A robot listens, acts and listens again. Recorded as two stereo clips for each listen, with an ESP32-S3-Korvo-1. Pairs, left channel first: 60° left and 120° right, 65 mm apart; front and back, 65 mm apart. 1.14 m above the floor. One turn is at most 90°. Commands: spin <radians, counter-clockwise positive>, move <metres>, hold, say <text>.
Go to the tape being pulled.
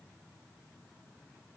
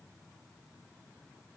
hold
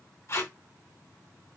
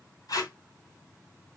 spin 0.26
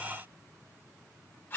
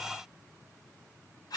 move 1.0
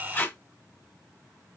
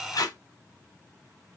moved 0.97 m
move 1.0
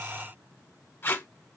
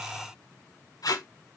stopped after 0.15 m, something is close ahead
say I am next to the tape being pulled.